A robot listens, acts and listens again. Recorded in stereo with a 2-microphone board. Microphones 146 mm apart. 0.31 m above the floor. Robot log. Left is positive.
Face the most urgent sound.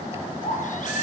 note: The baby crying: about 60° left or 120° left.
cmd yaw +60
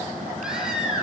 end: Facing the baby crying, over 4 m away.